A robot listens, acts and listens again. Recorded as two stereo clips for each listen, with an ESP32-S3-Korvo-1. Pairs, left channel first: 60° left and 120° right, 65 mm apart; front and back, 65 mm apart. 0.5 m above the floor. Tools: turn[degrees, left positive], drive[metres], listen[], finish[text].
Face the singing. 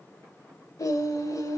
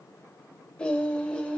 Thought: The singing: 70° left.
Action: turn[70]
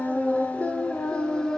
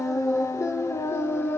Thought: The singing is now 10° right.
Action: turn[-10]
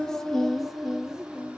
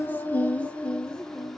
Thought: The singing is now 75° right.
Action: turn[-75]
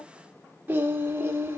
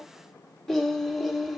Thought: The singing is now 85° right.
Action: turn[-85]
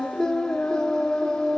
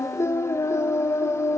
Action: finish[Facing the singing.]